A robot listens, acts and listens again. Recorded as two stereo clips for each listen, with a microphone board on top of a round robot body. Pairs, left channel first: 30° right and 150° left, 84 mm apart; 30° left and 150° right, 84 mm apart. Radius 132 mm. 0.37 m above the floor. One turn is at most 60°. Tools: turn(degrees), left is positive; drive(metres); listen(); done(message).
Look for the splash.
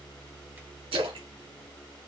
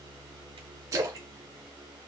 turn(degrees=60)
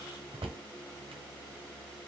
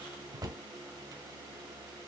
turn(degrees=60)
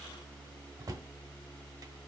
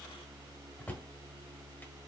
turn(degrees=35)
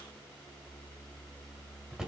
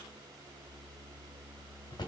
done("Facing where the splash came from. I can't hear it now.")